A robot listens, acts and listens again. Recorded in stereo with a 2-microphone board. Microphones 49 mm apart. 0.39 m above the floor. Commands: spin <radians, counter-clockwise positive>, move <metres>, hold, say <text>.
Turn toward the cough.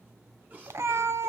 spin -0.61
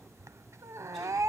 hold
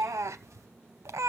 hold
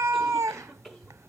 say Facing the cough.